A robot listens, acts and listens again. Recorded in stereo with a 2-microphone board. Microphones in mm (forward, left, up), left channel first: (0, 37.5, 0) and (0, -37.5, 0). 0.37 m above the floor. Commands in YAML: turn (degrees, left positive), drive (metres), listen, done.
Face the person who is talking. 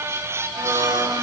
listen: true
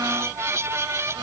listen: true
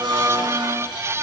done: "I can't make out anyone speaking, only a blender."